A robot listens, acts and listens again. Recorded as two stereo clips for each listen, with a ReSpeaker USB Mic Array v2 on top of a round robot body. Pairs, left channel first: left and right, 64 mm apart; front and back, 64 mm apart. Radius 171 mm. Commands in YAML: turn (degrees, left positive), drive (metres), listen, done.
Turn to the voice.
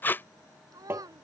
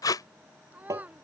turn: -110
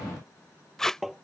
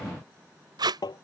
listen: true
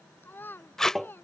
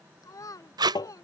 turn: 35
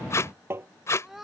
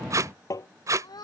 done: "Found it: a child speaking, straight ahead."